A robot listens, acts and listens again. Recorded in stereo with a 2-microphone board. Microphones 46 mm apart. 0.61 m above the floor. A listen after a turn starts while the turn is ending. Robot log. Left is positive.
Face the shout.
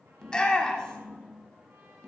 note: The shout: about 15° left or 165° left.
cmd yaw +15
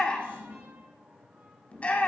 note: So it is at 150° left.
cmd yaw +150
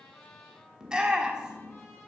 note: The shout is now 20° right.
cmd yaw -20
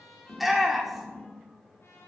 end: Found it: a shout, straight ahead.